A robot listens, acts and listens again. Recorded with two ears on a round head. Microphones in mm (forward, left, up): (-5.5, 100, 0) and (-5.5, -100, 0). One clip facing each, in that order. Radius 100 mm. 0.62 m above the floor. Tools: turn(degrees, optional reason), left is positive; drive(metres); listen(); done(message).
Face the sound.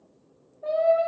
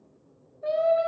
turn(degrees=-20, reason="The singing: about 20° right or 160° right.")
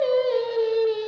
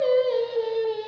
turn(degrees=10, reason="So it is at 10° left.")
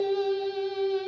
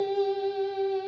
turn(degrees=20, reason="The singing is now 20° left.")
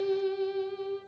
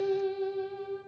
turn(degrees=30, reason="The singing is now 30° left.")
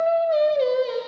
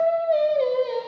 turn(degrees=20, reason="The singing is now 20° left.")
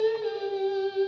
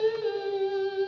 done("Found it: singing, straight ahead, 1 to 2 m away.")